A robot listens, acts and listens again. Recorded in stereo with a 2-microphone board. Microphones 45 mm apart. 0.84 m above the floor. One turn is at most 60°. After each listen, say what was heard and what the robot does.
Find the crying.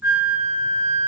Keep listening.
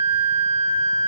Keep listening.
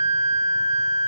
I can't make out crying, only a flute.